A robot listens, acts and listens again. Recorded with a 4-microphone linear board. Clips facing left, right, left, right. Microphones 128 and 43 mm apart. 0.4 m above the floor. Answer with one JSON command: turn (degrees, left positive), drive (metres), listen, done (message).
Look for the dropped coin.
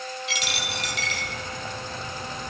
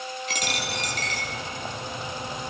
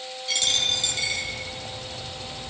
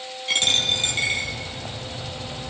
{"turn": -45}
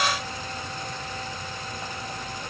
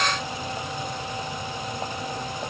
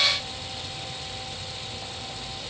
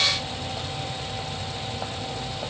{"listen": true}
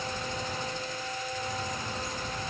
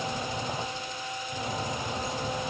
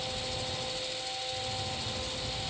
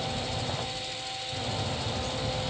{"done": "I heard a dropped coin, but can't make it out now. It was about straight ahead or 90° right."}